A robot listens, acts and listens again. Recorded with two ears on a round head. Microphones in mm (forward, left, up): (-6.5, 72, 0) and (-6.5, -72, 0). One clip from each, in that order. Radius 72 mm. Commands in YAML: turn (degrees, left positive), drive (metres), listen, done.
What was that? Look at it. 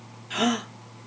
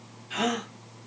turn: 30
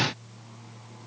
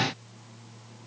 listen: true
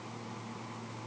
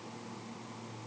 done: "I heard a gasp, but can't make it out now. It was about straight ahead or 120° left."